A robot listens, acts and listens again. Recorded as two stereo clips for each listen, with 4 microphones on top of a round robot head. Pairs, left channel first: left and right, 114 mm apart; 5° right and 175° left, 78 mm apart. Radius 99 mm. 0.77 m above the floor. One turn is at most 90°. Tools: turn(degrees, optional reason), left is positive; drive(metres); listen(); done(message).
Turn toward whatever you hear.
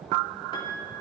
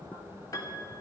turn(degrees=35, reason="The piano: 35° left.")
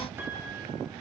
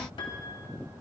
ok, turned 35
listen()
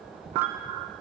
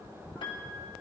listen()
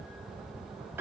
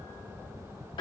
turn(degrees=-20, reason="The piano is now 20° right.")
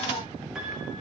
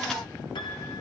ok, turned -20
listen()
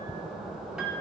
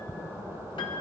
done("Facing the piano.")